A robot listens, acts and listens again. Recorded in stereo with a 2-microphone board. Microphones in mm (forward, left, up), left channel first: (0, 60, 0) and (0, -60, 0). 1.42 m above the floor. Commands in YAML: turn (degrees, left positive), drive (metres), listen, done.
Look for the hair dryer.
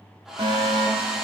turn: -30
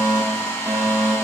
turn: 25
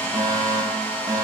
turn: 15
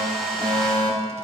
done: "Facing the hair dryer."